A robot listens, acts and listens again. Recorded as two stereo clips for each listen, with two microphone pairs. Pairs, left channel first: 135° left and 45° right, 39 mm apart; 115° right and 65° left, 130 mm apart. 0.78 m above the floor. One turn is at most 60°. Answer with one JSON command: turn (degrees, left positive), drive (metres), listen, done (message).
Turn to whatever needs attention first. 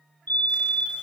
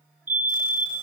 {"turn": 60}
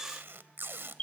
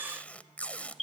{"turn": 60}
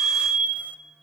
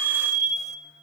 {"turn": 40}
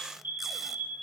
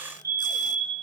{"done": "Facing the fire alarm, 2 to 4 m away."}